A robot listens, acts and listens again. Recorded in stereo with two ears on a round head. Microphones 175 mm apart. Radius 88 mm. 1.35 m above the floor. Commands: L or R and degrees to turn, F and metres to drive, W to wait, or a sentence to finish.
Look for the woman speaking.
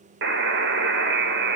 W
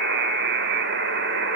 W
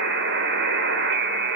I can't make out a woman speaking to turn to.